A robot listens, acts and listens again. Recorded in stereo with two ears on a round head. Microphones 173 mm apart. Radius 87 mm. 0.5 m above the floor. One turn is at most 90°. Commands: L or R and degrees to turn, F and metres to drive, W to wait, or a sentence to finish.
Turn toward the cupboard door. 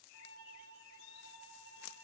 W
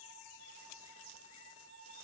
W
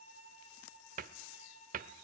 R45
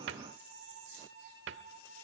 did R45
R85
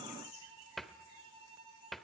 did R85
Facing the cupboard door, 1 to 2 m away.